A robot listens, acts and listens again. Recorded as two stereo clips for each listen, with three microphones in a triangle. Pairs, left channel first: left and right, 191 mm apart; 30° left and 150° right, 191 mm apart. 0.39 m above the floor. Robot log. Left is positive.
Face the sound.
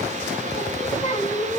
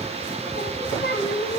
note: The singing: 35° left.
cmd yaw +35
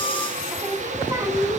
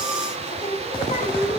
note: The singing is now 25° right.
cmd yaw -25
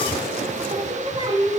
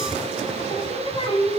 note: The singing is now 35° right.
cmd yaw -35
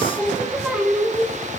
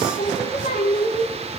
note: The singing is now 10° right.
cmd yaw -10
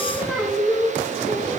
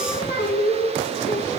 end: Found it: singing, straight ahead, 2 to 4 m away.